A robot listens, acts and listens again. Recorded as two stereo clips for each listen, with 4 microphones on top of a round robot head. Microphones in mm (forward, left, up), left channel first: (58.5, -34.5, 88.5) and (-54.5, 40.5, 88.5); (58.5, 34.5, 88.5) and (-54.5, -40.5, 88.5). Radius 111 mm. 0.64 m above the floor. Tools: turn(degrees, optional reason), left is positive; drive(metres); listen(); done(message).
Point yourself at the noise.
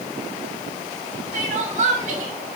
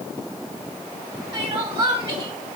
turn(degrees=165, reason="The crying: 165° left.")
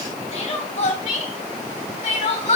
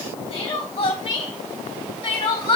done("Facing the crying.")